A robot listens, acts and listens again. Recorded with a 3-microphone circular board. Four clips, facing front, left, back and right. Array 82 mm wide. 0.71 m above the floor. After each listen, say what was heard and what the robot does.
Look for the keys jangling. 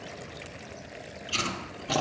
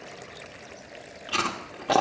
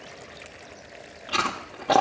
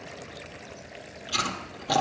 Keep listening.
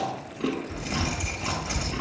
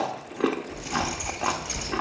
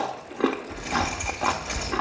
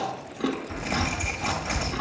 The keys jangling: 95° right. Turn 95° right.
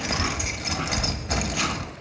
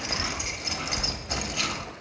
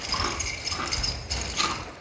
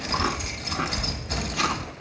Facing the keys jangling, 1 to 2 m away.